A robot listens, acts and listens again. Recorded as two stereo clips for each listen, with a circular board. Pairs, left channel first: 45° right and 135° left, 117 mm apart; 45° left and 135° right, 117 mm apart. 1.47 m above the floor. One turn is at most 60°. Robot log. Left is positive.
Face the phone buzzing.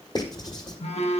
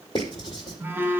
note: The phone buzzing: 65° right.
cmd yaw -60
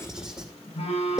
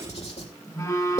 note: The phone buzzing is now 15° right.
cmd yaw -15
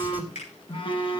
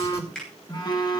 end: Facing the phone buzzing, 1 to 2 m away.